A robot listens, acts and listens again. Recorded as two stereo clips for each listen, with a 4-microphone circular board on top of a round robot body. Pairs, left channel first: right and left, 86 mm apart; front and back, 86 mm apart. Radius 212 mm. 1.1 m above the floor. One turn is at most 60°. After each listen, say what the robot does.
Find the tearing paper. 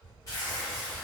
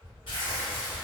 Turn 35° right.
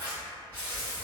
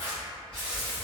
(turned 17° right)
Turn 20° right.
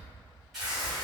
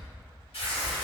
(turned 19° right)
Facing the tearing paper.